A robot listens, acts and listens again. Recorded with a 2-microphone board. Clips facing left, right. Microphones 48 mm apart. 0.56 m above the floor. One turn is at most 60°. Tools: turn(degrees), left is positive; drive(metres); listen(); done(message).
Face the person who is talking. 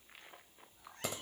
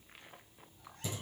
listen()
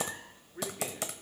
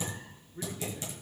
turn(degrees=35)
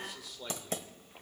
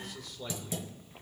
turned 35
done("Found it: a man speaking, straight ahead, 1 to 2 m away.")